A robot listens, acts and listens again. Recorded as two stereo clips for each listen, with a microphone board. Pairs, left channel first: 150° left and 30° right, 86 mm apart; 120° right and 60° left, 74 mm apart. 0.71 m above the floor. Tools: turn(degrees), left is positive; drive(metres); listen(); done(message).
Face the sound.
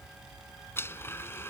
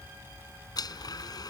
turn(degrees=-145)
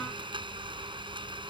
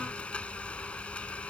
turn(degrees=-45)
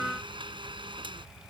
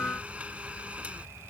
turn(degrees=-15)
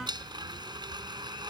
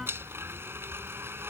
done("Facing the blender.")